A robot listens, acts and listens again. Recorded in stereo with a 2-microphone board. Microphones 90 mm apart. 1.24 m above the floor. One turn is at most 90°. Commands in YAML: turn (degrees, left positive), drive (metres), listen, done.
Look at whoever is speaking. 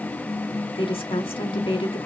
turn: 90
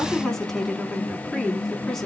done: "Facing the woman speaking, 2 to 4 m away."